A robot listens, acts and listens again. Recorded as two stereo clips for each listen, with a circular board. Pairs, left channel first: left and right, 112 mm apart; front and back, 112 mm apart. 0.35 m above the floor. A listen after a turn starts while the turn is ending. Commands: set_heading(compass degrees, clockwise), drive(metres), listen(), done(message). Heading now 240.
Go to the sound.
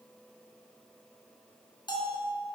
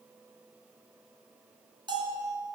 set_heading(105)
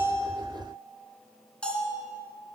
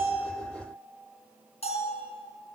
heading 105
set_heading(95)
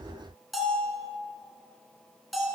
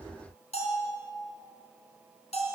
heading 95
drive(1.0)
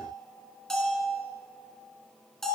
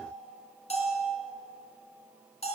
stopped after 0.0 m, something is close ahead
done("Blocked. The bell is further on, straight ahead.")